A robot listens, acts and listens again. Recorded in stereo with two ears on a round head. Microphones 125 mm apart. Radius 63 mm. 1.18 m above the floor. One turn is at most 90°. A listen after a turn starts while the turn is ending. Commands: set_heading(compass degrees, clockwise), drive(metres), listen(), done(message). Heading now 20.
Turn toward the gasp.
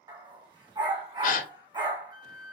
set_heading(315)
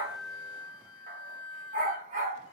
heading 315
listen()
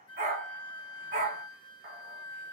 done("I heard a gasp, but can't make it out now. It was about straight ahead or 50° left.")